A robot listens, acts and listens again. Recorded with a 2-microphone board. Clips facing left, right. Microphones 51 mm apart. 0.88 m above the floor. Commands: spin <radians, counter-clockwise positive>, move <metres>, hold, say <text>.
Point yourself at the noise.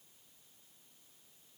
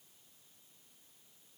hold
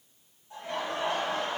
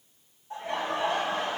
spin -0.35
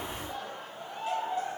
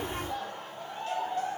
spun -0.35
spin 0.35
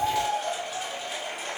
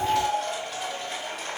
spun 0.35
spin 0.17
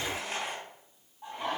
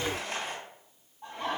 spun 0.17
say Facing the laughter.